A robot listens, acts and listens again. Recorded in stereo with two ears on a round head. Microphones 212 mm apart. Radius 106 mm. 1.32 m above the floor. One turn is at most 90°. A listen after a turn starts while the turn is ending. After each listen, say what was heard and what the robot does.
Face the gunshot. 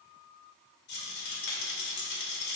Keep listening.
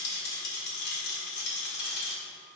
Keep listening.
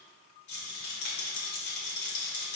I can't make out a gunshot, only a rattle.